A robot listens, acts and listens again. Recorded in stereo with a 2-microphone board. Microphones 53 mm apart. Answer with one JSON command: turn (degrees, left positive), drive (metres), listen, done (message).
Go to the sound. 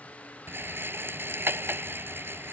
{"turn": -50}
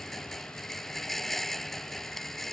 {"drive": 1.0}
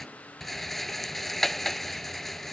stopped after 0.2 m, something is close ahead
{"done": "Something is in my way. I am facing the rattle but have not reached it."}